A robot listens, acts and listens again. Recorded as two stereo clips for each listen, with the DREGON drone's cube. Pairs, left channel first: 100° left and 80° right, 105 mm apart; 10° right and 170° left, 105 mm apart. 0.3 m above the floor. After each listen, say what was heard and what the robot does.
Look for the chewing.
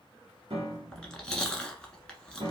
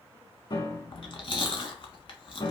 The chewing: 20° left. Turn 20° left.
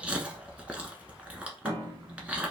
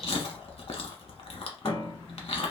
Facing the chewing.